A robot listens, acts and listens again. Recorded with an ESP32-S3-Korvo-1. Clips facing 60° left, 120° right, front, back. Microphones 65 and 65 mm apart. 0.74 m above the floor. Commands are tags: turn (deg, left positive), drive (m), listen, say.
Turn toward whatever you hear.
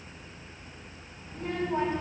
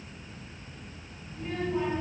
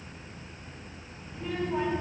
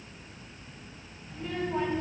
<turn deg="80"/>
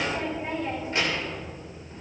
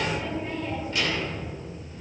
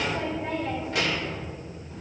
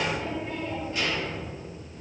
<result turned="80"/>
<say>Facing the child speaking.</say>